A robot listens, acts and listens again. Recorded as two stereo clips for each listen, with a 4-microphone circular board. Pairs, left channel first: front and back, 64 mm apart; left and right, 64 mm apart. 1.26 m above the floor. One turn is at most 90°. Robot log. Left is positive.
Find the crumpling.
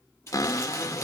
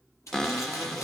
note: The crumpling: 50° left.
cmd yaw +50
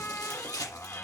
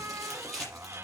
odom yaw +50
end: Found it: crumpling, straight ahead, over 4 m away.